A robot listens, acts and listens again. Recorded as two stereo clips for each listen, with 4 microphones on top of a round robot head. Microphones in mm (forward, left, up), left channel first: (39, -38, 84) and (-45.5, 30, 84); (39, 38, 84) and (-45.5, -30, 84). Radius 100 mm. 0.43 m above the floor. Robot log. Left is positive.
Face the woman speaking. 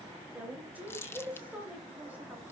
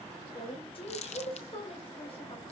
note: The woman speaking: 65° left.
cmd yaw +65
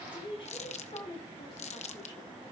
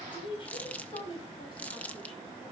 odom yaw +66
end: Found it: a woman speaking, straight ahead.